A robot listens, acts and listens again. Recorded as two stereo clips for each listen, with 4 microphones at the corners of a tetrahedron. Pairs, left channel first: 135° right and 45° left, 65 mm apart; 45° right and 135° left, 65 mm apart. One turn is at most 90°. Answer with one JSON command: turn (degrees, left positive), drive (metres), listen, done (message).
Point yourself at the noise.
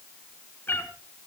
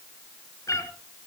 {"turn": -80}
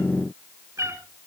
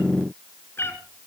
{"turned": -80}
{"done": "Found it: a cat meowing, straight ahead, 2 to 4 m away."}